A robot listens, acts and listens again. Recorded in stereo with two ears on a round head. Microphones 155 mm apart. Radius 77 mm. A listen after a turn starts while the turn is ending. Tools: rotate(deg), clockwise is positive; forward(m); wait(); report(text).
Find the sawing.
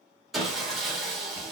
rotate(-30)
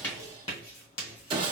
rotate(30)
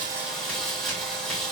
report("Found it: sawing, straight ahead.")